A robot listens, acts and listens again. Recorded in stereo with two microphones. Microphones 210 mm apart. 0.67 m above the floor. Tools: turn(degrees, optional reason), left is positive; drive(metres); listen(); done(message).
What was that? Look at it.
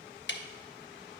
turn(degrees=60, reason="The ticking: about 60° left or 120° left.")
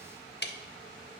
turn(degrees=60, reason="So it is at 60° left.")
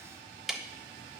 done("Found it: ticking, straight ahead, under 1 m away.")